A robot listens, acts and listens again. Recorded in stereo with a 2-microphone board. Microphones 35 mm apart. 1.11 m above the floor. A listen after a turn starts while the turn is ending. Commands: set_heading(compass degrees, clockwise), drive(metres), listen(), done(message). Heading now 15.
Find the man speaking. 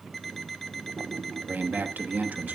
set_heading(60)
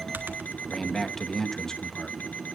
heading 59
set_heading(44)
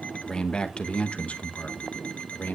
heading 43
set_heading(353)
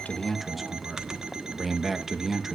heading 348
done("Facing the man speaking, 1 to 2 m away.")